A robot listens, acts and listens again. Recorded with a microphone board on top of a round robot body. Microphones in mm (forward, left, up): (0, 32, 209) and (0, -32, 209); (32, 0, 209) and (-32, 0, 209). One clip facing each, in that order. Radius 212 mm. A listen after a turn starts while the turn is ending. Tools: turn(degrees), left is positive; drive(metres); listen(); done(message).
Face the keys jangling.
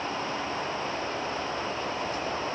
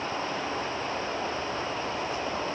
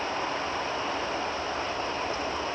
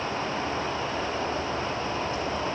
listen()
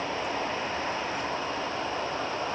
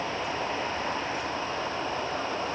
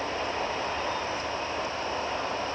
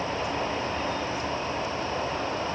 listen()
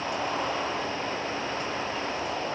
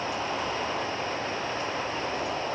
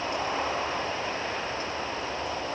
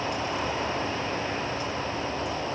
done("I can't make out keys jangling to turn to.")